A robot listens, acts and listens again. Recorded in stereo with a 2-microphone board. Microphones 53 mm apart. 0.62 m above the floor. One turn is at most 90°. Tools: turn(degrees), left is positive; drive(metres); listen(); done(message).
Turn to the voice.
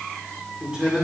turn(degrees=-20)
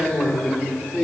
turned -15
done("Facing the man speaking.")